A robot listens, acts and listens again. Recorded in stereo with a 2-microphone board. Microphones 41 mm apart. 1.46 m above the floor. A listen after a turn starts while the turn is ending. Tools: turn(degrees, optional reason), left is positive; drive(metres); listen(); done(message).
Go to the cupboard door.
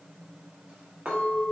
listen()
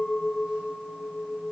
listen()
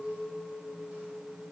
done("I can't make out a cupboard door to turn to.")